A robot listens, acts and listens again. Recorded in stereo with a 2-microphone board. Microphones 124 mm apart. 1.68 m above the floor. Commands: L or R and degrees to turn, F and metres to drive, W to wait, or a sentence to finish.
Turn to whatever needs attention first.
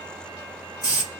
W
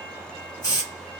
W
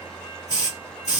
I can't make out anything urgent to turn to.